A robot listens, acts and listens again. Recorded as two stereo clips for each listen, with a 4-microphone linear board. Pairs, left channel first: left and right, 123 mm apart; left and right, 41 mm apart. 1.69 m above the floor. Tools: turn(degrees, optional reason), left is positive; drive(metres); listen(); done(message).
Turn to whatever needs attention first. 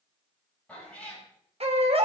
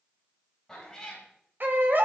turn(degrees=-55, reason="The baby crying: about 55° right or 125° right.")
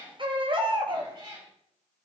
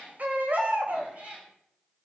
turn(degrees=-55, reason="So it is at 55° right.")
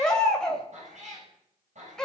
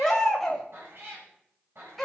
done("Facing the baby crying, 2 to 4 m away.")